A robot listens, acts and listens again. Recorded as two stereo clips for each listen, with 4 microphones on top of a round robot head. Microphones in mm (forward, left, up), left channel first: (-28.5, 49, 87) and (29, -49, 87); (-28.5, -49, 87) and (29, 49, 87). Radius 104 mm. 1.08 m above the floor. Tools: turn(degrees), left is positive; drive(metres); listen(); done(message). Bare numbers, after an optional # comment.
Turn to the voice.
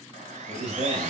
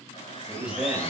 # The man speaking: 20° right.
turn(-20)
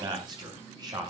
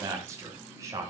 done("Facing the man speaking, over 4 m away.")